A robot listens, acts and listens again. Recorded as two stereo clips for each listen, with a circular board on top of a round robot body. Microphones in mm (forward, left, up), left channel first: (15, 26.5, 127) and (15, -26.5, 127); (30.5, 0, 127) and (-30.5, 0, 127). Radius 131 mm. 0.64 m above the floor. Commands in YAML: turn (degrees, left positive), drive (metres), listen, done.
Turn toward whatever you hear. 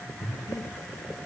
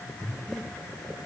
turn: 85
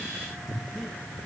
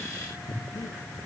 done: "Facing the breathing, 2 to 4 m away."